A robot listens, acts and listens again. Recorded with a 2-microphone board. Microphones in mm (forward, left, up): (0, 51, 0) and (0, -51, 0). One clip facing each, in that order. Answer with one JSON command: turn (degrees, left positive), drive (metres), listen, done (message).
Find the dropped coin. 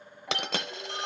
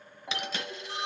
{"turn": 70}
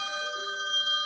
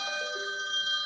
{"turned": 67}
{"listen": true}
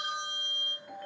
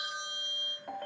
{"done": "I heard a dropped coin, but can't make it out now. It was about straight ahead or 45° left."}